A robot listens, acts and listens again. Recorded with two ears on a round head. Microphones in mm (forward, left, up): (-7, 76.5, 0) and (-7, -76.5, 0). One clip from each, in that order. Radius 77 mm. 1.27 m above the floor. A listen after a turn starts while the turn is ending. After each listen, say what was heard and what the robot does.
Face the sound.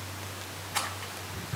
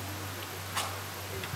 Turn 90° left.
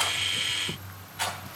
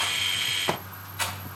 Facing the rattle.